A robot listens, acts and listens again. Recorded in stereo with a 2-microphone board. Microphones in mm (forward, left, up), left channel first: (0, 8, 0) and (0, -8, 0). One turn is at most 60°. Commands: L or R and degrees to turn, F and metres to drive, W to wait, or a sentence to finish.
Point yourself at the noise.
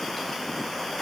W
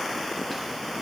W
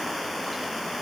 I can't make out anything to turn to.